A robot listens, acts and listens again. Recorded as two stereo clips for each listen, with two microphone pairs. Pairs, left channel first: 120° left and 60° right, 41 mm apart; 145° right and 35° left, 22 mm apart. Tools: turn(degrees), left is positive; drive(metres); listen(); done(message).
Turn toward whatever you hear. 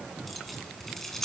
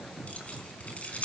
turn(degrees=-155)
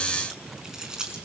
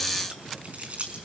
turn(degrees=15)
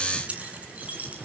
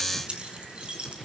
done("Facing the keys jangling.")